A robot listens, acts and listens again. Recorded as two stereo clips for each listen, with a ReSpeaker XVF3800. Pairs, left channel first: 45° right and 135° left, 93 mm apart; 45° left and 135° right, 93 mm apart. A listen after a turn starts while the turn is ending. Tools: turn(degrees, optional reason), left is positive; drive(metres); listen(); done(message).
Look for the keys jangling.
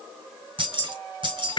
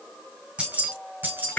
turn(degrees=160, reason="The keys jangling: 160° left.")
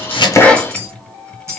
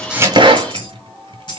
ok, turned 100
turn(degrees=80, reason="The keys jangling is now 80° left.")
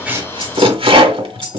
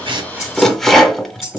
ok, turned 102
turn(degrees=-15, reason="The keys jangling is now 15° right.")
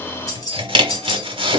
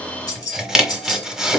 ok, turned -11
done("Facing the keys jangling.")